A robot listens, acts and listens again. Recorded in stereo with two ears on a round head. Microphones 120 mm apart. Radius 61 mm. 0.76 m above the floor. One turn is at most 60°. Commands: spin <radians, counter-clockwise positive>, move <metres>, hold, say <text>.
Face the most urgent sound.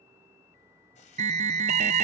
spin -0.87
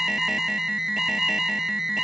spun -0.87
say Found it: an alarm, straight ahead, under 1 m away.